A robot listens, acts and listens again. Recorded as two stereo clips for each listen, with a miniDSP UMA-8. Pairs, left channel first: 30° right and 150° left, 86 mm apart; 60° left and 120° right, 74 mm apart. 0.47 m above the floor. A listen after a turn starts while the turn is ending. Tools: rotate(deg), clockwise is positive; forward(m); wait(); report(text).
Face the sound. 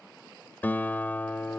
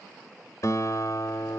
rotate(-35)
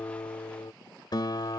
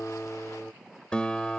rotate(15)
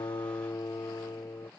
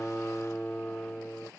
report("Found it: a guitar, straight ahead.")